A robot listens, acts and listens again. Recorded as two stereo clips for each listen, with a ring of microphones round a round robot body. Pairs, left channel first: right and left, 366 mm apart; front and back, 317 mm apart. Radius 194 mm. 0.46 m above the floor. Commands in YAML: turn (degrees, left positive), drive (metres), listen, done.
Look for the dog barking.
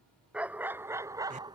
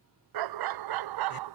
turn: 170
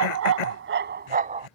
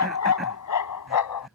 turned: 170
turn: 15
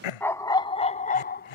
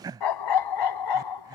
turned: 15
turn: -25
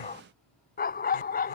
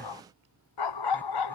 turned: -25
turn: -25
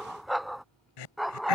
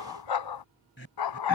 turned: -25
done: "Facing the dog barking."